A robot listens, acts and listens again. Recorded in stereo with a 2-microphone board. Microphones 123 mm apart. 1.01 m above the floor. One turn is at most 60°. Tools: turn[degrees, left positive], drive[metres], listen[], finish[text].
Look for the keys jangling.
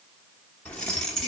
Action: turn[30]
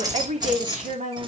Thought: So it is at 40° right.
Action: turn[-40]
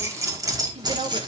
Thought: The keys jangling is now 40° right.
Action: turn[-40]
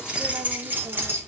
Thought: The keys jangling is now 20° right.
Action: turn[-20]
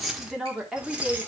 Thought: The keys jangling is now 10° right.
Action: turn[-10]
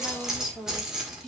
Action: finish[Found it: keys jangling, straight ahead.]